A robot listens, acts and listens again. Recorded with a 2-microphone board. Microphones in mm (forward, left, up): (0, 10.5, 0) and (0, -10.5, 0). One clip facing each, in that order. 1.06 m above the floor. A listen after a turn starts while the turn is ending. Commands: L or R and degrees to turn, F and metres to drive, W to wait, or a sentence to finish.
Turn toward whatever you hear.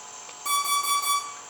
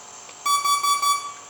R40
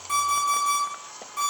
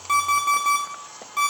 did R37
R95
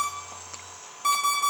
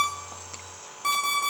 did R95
Facing the alarm clock, 1 to 2 m away.